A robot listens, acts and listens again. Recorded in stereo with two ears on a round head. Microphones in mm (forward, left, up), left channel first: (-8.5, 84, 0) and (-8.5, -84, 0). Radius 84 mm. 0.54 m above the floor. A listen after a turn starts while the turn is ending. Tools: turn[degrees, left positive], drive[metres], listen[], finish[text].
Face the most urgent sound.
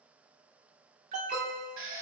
Thought: The alarm: about 40° right or 140° right.
Action: turn[-40]
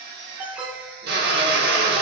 Action: finish[Found it: an alarm, straight ahead, under 1 m away.]